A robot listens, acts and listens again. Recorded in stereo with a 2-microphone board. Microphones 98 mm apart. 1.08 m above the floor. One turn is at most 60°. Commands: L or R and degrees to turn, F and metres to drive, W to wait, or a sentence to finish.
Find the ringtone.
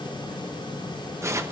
W
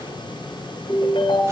L60
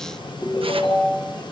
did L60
L60
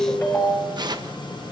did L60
L20
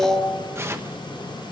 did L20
Found it: a ringtone, straight ahead.